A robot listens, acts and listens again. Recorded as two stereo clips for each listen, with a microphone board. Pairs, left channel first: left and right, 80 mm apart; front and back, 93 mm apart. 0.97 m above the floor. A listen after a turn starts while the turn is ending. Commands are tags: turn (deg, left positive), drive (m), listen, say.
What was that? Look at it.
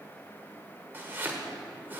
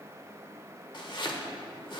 <turn deg="-30"/>
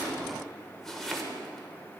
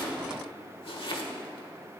<say>Found it: chopping, straight ahead, 1 to 2 m away.</say>